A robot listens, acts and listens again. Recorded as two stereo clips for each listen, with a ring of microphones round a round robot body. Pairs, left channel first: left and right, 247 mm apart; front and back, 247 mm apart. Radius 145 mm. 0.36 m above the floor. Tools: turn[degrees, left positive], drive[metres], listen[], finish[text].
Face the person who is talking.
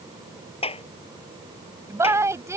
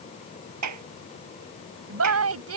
Thought: The woman speaking: 170° right.
Action: turn[-170]
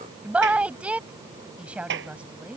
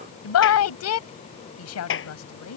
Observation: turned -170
Action: finish[Found it: a woman speaking, straight ahead.]